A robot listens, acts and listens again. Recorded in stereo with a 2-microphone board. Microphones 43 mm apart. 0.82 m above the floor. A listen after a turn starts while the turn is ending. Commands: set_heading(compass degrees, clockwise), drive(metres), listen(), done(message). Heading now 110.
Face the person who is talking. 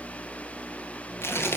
listen()
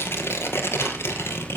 listen()
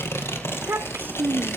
set_heading(160)
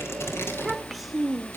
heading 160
done("Found it: a child speaking, straight ahead.")